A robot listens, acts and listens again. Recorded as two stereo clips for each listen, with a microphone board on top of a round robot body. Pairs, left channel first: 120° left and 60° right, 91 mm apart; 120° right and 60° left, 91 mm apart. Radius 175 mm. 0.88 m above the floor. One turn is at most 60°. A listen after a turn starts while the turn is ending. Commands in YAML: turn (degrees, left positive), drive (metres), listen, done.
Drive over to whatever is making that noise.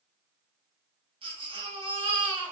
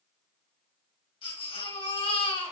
turn: -60
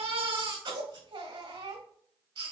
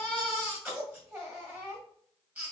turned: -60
turn: -20
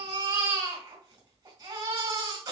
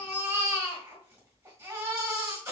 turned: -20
turn: -10
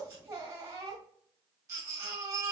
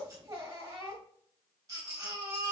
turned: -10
drive: 1.0
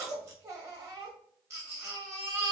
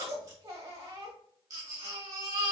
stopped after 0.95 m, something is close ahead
done: "I am next to the baby crying."